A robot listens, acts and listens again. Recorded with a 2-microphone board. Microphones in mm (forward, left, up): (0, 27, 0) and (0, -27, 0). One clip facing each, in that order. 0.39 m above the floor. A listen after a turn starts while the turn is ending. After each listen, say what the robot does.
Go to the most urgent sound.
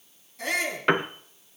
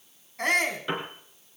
Turn 55° right.
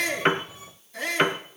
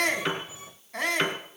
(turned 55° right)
Turn 65° right.
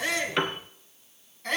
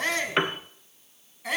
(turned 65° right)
Drive 1.0 m forward.
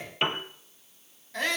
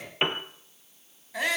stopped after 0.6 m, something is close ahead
Turn 10° right.
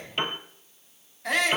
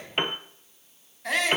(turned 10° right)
Something is in my way. I am facing the shout but have not reached it.